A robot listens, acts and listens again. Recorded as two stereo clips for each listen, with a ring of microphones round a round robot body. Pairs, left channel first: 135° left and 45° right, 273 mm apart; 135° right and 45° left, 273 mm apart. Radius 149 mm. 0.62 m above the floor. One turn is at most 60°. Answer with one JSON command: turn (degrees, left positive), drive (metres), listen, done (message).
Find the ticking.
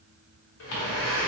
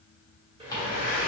{"turn": 60}
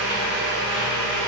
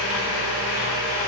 {"turn": 60}
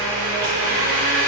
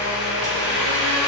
{"turn": 30}
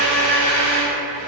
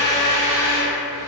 {"done": "I heard ticking from this way, but can't make it out now."}